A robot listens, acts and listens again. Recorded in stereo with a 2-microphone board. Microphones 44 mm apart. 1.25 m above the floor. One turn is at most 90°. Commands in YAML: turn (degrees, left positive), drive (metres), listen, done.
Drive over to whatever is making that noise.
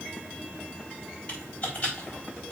turn: 30
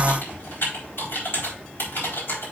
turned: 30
turn: 90
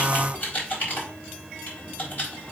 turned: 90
turn: 50
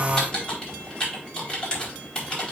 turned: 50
turn: 20
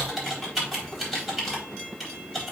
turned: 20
drive: 1.0
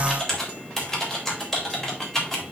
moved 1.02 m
turn: 10
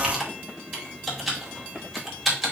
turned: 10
drive: 1.0
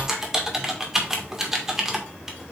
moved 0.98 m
turn: -10
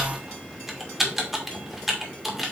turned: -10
drive: 1.0
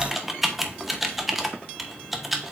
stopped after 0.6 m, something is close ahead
done: "I am next to the typing on a keyboard."